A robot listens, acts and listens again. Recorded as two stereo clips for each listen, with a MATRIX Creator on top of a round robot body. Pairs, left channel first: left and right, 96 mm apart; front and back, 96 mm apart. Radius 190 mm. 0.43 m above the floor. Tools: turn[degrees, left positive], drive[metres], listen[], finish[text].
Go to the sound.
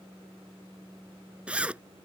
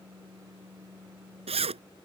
Thought: The zipper: 170° right.
Action: turn[-170]
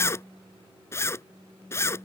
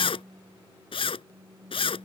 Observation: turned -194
Thought: The zipper is now 25° left.
Action: turn[25]
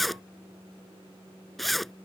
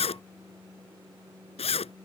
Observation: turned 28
Action: drive[1.0]
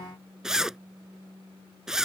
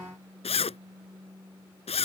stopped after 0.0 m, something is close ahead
Action: finish[Something is in my way. I am facing the zipper but have not reached it.]